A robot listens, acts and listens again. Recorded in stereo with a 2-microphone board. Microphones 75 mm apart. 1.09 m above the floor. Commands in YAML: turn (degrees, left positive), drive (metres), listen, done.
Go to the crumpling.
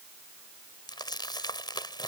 turn: 70
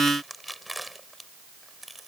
drive: 1.0
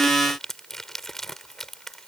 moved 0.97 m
drive: 1.0
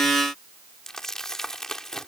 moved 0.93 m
drive: 1.0
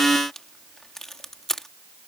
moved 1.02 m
drive: 1.0
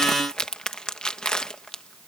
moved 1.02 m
turn: 10
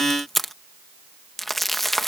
drive: 1.0
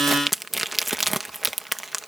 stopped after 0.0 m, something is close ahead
done: "Arrived at the crumpling, straight ahead."